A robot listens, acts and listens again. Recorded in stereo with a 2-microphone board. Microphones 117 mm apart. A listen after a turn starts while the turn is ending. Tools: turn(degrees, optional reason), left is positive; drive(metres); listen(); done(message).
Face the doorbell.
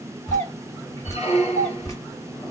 turn(degrees=30, reason="The doorbell: about 30° left or 150° left.")
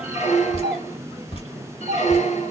done("Found it: a doorbell, straight ahead.")